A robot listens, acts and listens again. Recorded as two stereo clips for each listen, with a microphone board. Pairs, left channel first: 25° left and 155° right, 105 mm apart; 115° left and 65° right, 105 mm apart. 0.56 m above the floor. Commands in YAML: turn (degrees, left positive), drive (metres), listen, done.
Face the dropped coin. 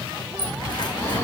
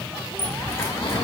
turn: 50
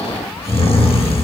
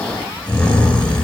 done: "I heard a dropped coin from this way, but can't make it out now."